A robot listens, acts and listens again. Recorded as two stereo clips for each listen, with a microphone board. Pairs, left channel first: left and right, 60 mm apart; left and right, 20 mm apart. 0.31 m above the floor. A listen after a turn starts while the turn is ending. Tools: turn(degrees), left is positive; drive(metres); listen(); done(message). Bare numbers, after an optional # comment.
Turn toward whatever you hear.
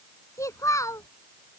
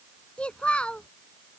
# The child speaking: about 60° left or 120° left.
turn(60)
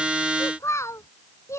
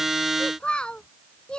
# So it is at 55° left.
turn(55)
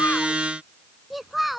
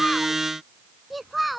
done("Facing the child speaking.")